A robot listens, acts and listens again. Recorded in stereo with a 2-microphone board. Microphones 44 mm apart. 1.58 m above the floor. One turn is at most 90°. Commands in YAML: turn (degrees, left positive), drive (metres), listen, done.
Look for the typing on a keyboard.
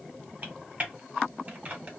turn: -35
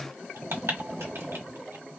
turn: -90
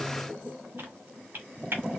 turn: -55
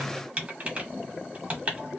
turn: -30
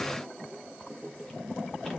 listen: true
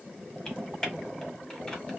turn: 15
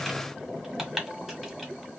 done: "Found it: typing on a keyboard, straight ahead."